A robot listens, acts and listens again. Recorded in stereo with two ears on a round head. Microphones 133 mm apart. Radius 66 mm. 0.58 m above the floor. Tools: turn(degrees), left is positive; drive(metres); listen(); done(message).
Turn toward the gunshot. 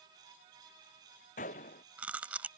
turn(degrees=55)
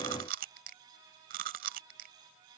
listen()
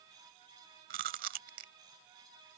done("I heard a gunshot, but can't make it out now. It was about straight ahead or 70° left.")